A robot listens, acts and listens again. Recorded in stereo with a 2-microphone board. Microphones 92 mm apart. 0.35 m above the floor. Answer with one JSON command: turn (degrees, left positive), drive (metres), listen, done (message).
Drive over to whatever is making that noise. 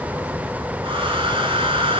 {"turn": -75}
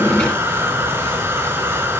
{"turn": -25}
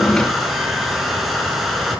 {"drive": 1.0}
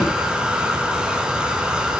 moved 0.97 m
{"turn": -10}
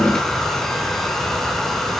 {"drive": 1.0}
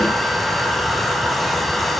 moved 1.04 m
{"drive": 1.0}
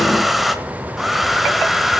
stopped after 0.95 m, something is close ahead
{"done": "Arrived at the hair dryer, straight ahead."}